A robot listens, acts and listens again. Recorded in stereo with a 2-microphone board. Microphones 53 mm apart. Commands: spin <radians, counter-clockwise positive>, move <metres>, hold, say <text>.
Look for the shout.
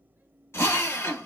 hold
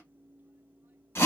hold
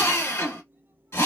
say I can't make out a shout to turn to.